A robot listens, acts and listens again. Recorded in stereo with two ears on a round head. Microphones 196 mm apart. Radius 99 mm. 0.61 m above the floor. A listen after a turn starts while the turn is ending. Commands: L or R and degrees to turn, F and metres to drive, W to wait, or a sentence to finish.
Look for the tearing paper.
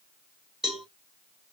W
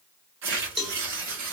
R60
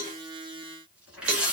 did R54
Facing the tearing paper.